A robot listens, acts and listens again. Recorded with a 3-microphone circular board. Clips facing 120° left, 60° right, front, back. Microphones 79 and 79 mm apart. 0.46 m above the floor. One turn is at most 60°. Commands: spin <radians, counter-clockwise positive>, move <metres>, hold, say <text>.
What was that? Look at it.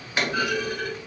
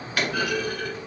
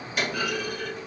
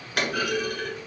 spin -1.05
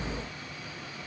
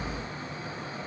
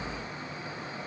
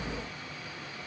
spin -1.05
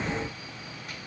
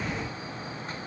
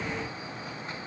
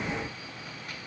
spin -0.96
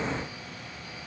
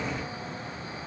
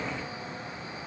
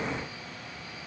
say Facing where the clunk came from. I can't hear it now.